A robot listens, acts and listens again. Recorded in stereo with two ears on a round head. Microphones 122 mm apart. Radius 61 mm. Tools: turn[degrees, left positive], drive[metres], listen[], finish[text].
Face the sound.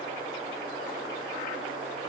Action: listen[]
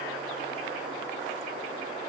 Action: listen[]
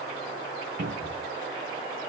Thought: The cupboard door: about 75° right or 105° right.
Action: turn[-75]
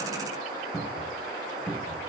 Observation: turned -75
Action: finish[Found it: a cupboard door, straight ahead.]